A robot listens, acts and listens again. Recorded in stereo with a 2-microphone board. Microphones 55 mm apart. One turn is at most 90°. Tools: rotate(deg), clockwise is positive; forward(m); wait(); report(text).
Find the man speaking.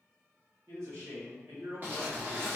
rotate(70)
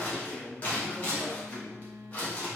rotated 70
rotate(40)
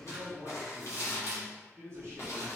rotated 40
rotate(55)
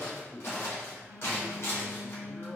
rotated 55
report("Found it: a man speaking, straight ahead, 1 to 2 m away.")